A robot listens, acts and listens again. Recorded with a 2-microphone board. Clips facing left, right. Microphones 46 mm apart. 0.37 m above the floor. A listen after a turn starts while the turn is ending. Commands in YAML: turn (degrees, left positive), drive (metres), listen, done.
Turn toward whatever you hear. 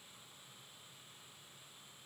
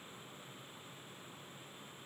listen: true
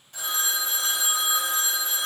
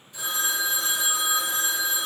turn: 65
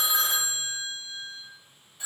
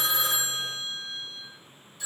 turn: 30
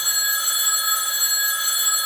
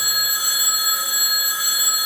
done: "Found it: a phone ringing, straight ahead."